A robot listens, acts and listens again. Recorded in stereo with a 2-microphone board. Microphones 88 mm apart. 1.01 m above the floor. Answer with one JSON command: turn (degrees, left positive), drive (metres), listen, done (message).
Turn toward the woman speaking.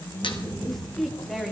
{"turn": 30}
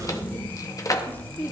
{"turn": 160}
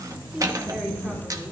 {"listen": true}
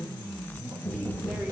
{"listen": true}
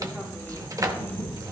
{"done": "Facing where the woman speaking came from. I can't hear it now."}